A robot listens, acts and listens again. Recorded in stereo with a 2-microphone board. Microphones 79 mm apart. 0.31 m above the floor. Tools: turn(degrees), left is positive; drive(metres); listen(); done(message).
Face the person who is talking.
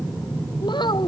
turn(degrees=70)
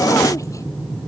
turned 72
listen()
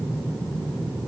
listen()
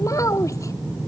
turn(degrees=40)
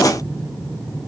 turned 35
listen()
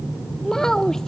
done("Facing the child speaking.")